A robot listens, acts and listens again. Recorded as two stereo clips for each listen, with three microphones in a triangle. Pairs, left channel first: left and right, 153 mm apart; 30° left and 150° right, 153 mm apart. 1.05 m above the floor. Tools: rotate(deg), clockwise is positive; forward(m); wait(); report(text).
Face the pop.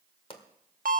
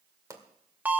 rotate(-140)
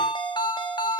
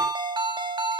report("I heard a pop from this way, but can't make it out now.")